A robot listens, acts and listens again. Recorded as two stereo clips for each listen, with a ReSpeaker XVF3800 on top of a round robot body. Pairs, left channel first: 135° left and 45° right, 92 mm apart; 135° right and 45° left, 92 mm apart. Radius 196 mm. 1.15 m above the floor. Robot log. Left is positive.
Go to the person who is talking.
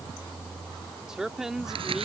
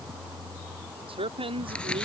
note: The man speaking: 40° left.
cmd yaw +40
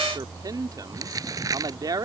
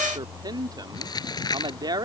cmd fwd 1.0
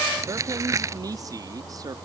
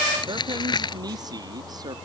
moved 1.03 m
cmd fwd 1.0
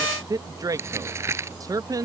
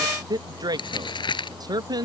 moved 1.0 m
cmd fwd 1.0
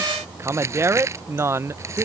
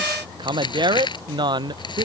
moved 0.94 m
note: The man speaking is now 15° left.
cmd yaw +15
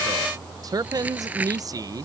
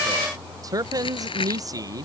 cmd fwd 1.0
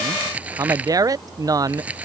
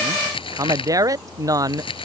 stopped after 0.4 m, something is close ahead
end: I am next to the man speaking.